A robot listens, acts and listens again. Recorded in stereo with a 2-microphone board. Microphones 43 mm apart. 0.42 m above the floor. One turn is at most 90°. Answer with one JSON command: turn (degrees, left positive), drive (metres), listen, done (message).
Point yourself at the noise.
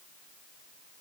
{"listen": true}
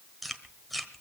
{"turn": 30}
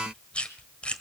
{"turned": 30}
{"turn": 90}
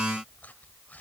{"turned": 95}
{"turn": 55}
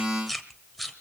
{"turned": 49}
{"done": "Facing the chewing."}